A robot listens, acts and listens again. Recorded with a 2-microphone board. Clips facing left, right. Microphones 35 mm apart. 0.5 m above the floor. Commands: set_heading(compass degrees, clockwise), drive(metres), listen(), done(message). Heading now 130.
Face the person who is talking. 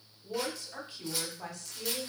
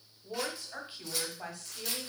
set_heading(160)
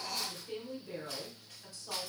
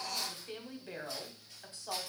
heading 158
set_heading(298)
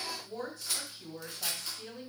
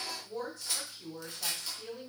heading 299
done("Found it: a woman speaking, straight ahead, 1 to 2 m away.")